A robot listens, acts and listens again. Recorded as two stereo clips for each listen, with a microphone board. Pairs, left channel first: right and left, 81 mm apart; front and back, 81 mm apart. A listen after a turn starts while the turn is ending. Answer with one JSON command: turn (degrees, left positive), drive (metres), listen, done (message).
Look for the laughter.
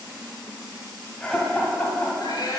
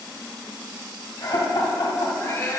{"turn": -15}
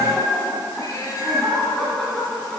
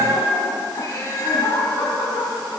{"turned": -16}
{"done": "Facing the laughter."}